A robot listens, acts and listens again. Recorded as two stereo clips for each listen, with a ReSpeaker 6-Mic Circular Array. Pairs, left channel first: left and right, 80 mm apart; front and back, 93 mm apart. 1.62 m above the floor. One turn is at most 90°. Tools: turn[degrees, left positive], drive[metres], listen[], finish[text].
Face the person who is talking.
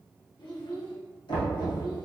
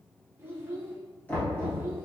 Thought: The child speaking: 115° left.
Action: turn[90]
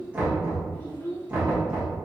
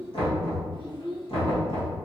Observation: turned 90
Thought: The child speaking is now 25° left.
Action: turn[25]
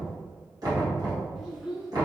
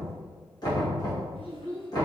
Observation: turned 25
Action: finish[Facing the child speaking.]